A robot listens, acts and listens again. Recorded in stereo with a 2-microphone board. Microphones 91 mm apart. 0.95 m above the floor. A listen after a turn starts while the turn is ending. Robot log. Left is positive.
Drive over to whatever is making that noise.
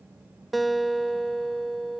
cmd yaw +30
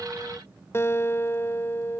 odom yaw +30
note: So it is at 150° left.
cmd yaw +150
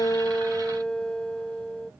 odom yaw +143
note: The guitar is now 10° left.
cmd yaw +10
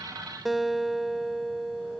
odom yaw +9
cmd fwd 1.0
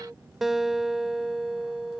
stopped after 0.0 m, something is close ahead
end: Blocked. The guitar is further on, straight ahead.